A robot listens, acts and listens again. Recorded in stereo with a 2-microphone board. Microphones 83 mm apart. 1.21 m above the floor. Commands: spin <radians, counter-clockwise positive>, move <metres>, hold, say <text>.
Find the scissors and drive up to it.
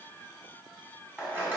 spin -0.35
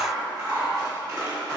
spin -2.36
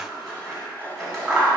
move 1.0
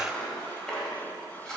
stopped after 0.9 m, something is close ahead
say Arrived at the scissors, straight ahead.